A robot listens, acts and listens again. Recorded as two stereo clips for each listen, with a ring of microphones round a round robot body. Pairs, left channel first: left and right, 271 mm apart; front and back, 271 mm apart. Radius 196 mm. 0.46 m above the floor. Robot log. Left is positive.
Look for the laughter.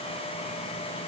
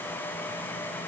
cmd idle
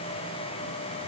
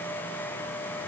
cmd idle
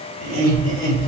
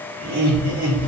note: The laughter: 160° right.
cmd yaw -160
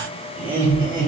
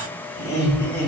note: The laughter is now 35° right.
cmd yaw -35
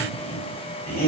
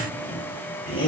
note: The laughter is now 25° left.
cmd yaw +25
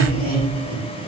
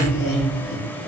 end: Found it: laughter, straight ahead.